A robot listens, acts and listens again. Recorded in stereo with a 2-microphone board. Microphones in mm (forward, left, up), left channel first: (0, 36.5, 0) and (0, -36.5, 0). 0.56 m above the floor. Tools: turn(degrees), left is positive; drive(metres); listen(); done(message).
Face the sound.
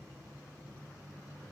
listen()
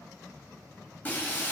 turn(degrees=25)
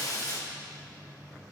turn(degrees=125)
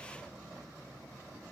done("Facing where the breaking glass came from. I can't hear it now.")